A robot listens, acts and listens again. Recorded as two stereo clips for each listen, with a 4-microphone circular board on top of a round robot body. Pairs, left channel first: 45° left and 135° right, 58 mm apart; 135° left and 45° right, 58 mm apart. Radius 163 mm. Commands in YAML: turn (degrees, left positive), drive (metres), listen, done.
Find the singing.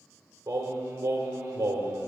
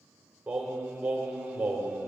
turn: -115
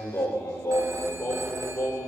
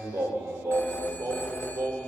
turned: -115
done: "Found it: singing, straight ahead."